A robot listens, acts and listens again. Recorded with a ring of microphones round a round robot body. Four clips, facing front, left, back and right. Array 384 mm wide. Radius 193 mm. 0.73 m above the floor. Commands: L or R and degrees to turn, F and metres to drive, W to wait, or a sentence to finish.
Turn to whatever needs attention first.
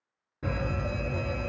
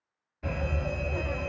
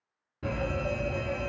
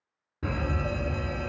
R80
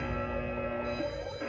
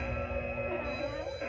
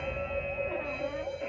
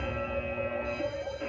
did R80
R30
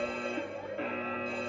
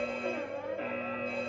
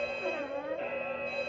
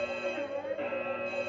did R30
Found it: a fire alarm, straight ahead, 2 to 4 m away.